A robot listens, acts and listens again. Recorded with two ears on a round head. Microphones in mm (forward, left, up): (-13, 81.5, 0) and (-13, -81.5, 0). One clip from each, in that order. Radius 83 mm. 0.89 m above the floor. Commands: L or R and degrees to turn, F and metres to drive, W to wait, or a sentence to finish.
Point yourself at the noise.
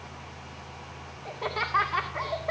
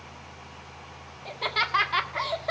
R60
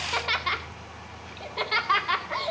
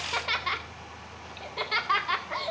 Found it: laughter, straight ahead.